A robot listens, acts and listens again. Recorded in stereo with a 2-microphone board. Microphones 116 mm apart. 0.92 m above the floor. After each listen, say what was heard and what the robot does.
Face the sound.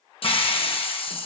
The hiss: about 50° left or 130° left. Turn 50° left.
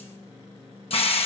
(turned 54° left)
So it is at 65° left. Turn 65° left.
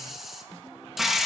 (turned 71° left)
Found it: a hiss, straight ahead, under 1 m away.